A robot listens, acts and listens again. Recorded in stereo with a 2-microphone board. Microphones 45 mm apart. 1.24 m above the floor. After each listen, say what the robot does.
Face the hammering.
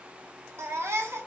Keep listening.
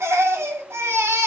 Keep listening.
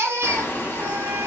Turn 60° left.
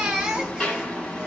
Turn 25° left.
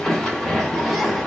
Facing the hammering, 1 to 2 m away.